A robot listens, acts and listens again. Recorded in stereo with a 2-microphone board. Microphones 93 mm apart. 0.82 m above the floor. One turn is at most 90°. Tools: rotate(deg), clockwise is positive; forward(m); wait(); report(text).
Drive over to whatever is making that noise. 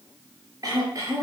rotate(40)
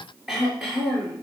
forward(1.0)
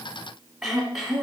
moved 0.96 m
forward(1.0)
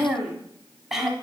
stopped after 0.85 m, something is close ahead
report("I am next to the throat clearing.")